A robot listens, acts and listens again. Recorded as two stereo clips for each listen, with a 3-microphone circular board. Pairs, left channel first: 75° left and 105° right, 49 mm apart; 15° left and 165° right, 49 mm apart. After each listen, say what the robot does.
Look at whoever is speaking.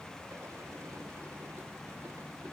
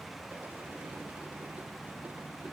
Keep listening.
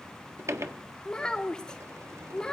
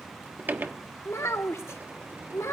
Found it: a child speaking, straight ahead.